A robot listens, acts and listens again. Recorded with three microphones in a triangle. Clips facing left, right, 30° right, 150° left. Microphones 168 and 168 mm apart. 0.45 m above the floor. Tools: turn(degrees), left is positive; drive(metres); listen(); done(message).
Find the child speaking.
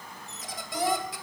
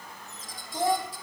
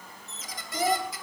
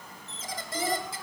turn(degrees=-25)
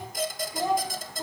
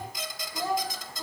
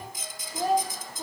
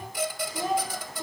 turn(degrees=20)
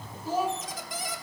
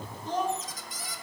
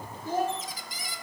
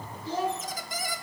done("Facing the child speaking.")